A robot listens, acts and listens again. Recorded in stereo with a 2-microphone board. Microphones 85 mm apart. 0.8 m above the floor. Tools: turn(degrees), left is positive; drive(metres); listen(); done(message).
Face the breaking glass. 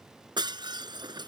turn(degrees=-60)
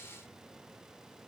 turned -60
listen()
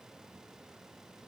done("I heard breaking glass, but can't make it out now. It was about straight ahead or 60° right.")